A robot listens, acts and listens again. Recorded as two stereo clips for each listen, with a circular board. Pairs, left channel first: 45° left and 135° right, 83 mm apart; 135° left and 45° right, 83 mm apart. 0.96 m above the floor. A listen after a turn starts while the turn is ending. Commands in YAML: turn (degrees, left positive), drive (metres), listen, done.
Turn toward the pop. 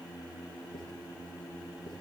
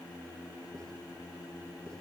listen: true
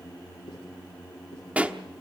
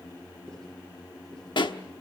turn: 150
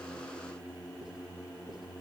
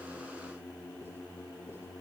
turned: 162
turn: -10
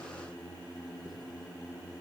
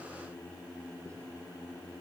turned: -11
done: "I heard a pop from this way, but can't make it out now."